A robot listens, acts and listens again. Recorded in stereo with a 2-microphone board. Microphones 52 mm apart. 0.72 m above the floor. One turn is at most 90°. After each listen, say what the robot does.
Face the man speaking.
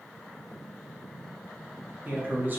Turn 40° right.
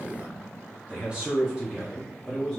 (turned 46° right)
Found it: a man speaking, straight ahead, 1 to 2 m away.